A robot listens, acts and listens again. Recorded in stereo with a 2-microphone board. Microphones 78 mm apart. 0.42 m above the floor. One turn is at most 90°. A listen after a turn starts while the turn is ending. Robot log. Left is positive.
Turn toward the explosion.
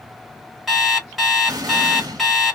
note: The explosion: about 60° right or 120° right.
cmd yaw -60
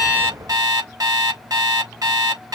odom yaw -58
cmd idle
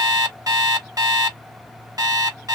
end: I heard an explosion, but can't make it out now. It was about straight ahead or 65° right.